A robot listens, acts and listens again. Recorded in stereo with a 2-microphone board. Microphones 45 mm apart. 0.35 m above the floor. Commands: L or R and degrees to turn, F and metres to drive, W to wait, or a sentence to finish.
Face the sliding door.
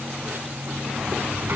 R50
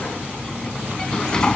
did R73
L20
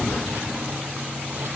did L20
Facing the sliding door.